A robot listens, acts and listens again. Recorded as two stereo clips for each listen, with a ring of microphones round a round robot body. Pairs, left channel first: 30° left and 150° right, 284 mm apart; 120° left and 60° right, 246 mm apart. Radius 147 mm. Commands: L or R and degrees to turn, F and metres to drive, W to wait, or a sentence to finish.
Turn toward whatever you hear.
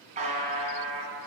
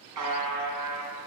R80
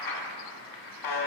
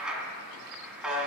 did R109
L25
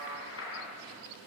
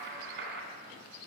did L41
R15
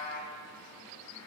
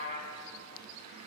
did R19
Facing the buzzer.